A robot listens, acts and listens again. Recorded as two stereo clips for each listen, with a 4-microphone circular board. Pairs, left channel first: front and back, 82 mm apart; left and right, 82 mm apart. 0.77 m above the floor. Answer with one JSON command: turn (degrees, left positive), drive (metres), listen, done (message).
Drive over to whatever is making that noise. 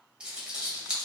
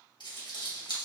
{"turn": 100}
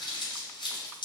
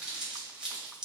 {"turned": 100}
{"turn": -10}
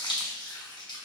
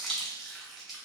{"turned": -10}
{"drive": 1.0}
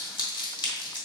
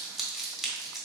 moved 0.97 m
{"drive": 1.0}
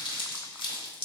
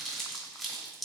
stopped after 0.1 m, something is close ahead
{"done": "I am next to the crumpling."}